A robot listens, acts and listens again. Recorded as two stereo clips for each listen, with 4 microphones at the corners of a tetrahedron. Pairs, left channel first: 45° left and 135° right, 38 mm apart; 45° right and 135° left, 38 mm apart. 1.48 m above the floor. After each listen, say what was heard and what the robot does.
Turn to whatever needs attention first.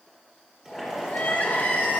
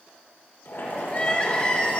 The crying: 10° left. Turn 10° left.
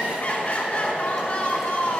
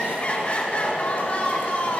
Facing the crying, 1 to 2 m away.